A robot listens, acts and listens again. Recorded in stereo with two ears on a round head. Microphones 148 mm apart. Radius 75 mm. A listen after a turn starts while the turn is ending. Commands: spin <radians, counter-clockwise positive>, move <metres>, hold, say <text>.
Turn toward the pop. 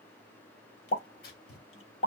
spin 0.79
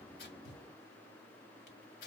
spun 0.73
hold
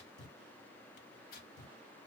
say I heard a pop, but can't make it out now. It was about straight ahead or 95° left.